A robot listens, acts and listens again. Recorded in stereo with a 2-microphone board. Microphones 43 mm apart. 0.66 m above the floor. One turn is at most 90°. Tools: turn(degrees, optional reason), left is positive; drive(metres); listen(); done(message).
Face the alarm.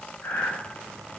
listen()
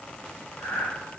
listen()
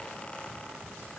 done("I can't make out an alarm, only breathing.")